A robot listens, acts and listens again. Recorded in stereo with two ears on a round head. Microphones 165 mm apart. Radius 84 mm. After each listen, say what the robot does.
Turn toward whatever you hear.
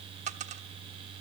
Turn 40° right.
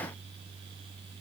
Keep listening.
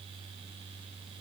I heard a dropped coin, but can't make it out now. It was about straight ahead or 100° right.